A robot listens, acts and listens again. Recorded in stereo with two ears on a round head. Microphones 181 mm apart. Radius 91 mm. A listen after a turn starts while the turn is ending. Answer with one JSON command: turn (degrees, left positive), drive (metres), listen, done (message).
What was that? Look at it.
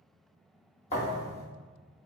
{"turn": 35}
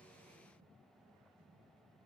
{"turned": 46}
{"listen": true}
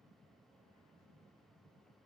{"done": "I heard a thud, but can't make it out now. It was about 15° right or 100° left."}